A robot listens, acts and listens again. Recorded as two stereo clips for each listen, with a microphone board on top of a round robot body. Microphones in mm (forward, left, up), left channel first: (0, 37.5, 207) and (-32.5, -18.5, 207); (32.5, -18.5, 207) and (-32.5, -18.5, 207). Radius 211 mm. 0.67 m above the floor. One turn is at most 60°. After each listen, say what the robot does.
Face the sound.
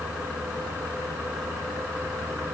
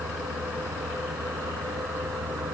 Keep listening.
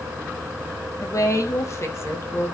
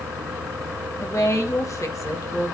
Turn 20° left.
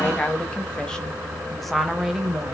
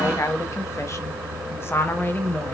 Turn 45° right.
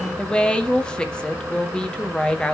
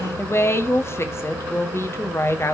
Turn 10° right.
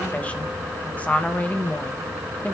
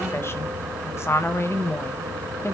Facing the woman speaking.